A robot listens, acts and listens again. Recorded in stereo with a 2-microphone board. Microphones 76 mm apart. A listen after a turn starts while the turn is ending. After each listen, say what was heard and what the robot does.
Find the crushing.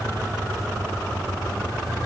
Keep listening.
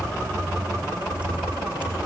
Keep listening.
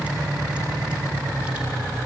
I can't make out crushing to turn to.